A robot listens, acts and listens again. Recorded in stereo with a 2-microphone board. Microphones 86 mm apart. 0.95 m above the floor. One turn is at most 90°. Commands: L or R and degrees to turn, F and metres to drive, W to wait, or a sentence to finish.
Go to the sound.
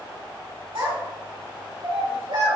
R90
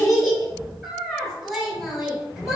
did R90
F1.0
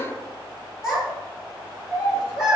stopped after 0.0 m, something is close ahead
R10
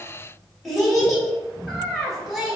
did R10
Blocked. The child speaking is further on, straight ahead.